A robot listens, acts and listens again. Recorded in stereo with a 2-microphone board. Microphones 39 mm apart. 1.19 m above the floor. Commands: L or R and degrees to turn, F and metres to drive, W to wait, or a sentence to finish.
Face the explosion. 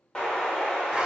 L20
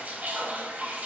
W
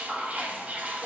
I heard an explosion, but can't make it out now. It was about straight ahead or 140° left.